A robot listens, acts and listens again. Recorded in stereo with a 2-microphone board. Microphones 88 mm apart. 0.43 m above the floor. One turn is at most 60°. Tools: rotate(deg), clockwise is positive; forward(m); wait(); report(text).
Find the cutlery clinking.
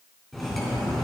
rotate(-30)
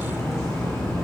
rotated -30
rotate(-60)
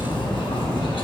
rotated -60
rotate(-60)
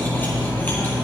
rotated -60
rotate(-20)
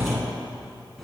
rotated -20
report("Found it: cutlery clinking, straight ahead.")